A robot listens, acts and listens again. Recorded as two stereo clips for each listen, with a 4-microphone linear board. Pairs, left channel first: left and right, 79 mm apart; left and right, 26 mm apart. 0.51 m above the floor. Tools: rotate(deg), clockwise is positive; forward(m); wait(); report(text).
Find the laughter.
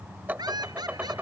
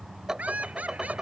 rotate(70)
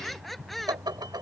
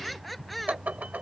report("Found it: laughter, straight ahead.")